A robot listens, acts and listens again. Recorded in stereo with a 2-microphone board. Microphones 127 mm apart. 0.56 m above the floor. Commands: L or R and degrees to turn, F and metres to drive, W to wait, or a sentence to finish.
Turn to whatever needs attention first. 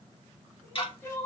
L20
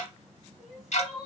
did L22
Found it: crying, straight ahead, 1 to 2 m away.